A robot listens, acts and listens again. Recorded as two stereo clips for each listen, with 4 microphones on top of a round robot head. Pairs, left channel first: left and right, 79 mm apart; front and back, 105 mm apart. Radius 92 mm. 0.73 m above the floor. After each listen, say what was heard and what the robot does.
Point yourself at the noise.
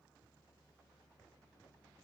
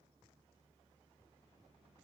Keep listening.
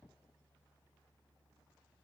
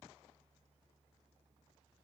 Keep listening.
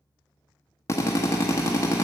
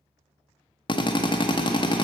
The drill: 40° left. Turn 40° left.
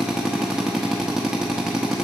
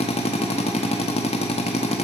Facing the drill, under 1 m away.